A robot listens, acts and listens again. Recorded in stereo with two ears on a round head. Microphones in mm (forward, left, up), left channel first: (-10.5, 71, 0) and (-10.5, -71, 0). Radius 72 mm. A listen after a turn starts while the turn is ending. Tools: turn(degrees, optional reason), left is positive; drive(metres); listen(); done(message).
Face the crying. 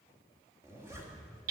listen()
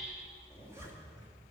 listen()
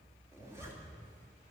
done("I can't make out crying, only a zipper and hammering.")